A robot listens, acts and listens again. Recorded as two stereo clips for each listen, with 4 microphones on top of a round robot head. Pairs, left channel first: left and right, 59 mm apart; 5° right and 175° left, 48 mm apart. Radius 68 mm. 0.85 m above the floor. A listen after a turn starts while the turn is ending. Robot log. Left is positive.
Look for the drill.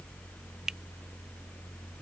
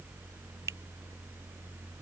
cmd idle
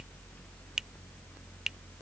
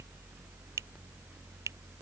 cmd idle
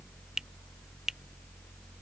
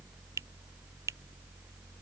end: I can't make out a drill, only a finger snap.